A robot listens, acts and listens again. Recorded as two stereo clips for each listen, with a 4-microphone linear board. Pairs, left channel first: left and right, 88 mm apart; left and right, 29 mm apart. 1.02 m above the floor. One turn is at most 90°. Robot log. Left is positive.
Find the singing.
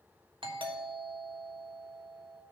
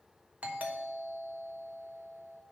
cmd idle
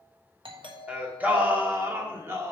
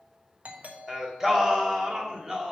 note: The singing: about 35° right or 145° right.
cmd yaw -35
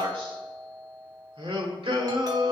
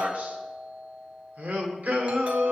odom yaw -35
note: So it is at 95° right.
cmd yaw -90
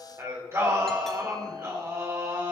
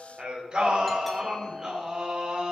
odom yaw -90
note: The singing is now 35° right.
cmd yaw -35
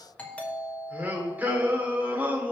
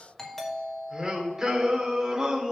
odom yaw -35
note: The singing is now 20° right.
cmd yaw -20
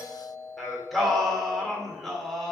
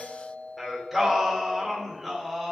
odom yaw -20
end: Facing the singing.